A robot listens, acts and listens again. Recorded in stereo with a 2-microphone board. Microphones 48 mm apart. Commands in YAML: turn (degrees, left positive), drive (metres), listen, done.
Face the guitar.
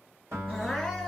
turn: -90
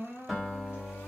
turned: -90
done: "Found it: a guitar, straight ahead."